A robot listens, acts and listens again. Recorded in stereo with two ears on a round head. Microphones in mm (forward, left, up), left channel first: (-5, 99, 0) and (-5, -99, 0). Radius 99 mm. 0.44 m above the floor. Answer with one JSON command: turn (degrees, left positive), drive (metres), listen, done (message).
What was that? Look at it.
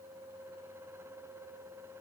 {"listen": true}
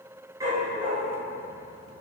{"turn": -20}
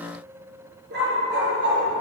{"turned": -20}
{"turn": -120}
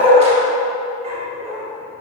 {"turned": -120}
{"turn": -30}
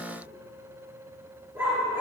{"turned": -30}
{"turn": -10}
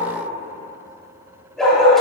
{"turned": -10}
{"done": "Found it: a dog barking, straight ahead."}